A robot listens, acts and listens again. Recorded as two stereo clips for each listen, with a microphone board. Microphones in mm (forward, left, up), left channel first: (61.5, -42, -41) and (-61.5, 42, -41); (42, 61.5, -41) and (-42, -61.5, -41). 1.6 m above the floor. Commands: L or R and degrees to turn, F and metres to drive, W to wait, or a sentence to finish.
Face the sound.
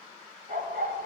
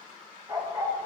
L170
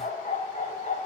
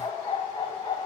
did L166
Found it: a dog barking, straight ahead.